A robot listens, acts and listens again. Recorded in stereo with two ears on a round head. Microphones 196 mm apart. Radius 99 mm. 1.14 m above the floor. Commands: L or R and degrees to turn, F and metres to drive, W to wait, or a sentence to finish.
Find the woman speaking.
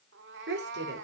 R50
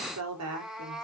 R75
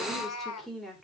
Facing the woman speaking.